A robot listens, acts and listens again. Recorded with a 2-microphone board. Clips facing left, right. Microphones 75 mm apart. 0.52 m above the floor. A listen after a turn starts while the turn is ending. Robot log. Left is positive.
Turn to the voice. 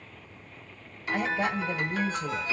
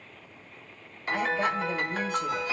cmd yaw +30
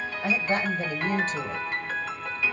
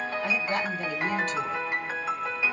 note: So it is at 145° left.
cmd yaw +145
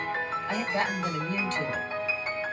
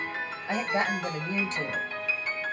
note: The woman speaking is now 20° right.
cmd yaw -20
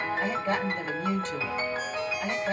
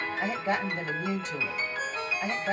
note: The woman speaking is now 10° right.
cmd yaw -10
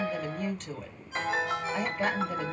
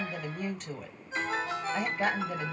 end: Facing the woman speaking.